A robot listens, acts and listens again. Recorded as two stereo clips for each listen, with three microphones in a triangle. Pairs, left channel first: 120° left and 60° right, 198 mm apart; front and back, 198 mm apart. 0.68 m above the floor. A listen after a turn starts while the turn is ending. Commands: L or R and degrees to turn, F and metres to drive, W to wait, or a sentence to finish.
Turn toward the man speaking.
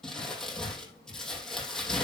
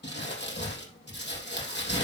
W
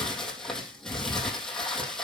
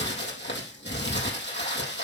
W
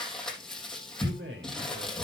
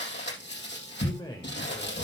R70
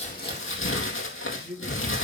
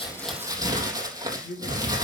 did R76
R15
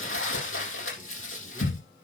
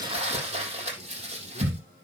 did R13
W
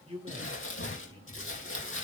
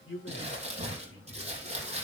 Found it: a man speaking, straight ahead.